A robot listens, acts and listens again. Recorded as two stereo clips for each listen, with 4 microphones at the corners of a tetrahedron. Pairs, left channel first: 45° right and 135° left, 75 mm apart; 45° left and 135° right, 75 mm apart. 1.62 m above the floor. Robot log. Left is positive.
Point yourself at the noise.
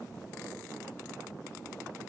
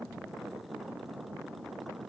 cmd idle
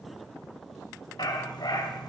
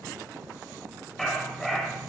note: The dog barking: 45° right.
cmd yaw -45
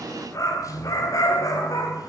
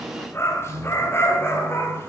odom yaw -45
note: The dog barking is now 10° right.
cmd yaw -10
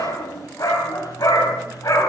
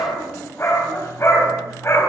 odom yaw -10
end: Facing the dog barking.